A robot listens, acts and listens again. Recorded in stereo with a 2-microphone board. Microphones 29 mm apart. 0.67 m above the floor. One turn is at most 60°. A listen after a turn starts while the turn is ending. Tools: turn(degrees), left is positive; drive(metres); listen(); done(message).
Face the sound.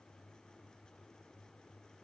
listen()
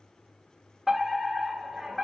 turn(degrees=-30)
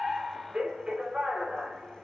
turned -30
turn(degrees=-60)
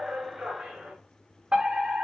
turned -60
turn(degrees=-60)
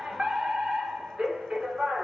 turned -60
turn(degrees=-50)
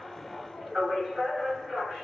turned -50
done("Found it: a fire alarm, straight ahead.")